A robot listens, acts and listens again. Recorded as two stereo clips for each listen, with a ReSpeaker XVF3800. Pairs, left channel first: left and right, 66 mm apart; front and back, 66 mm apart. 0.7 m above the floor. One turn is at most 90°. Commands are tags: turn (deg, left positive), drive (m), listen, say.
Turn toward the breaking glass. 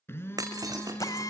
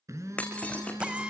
<turn deg="-70"/>
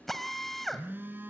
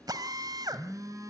<say>I heard breaking glass from this way, but can't make it out now.</say>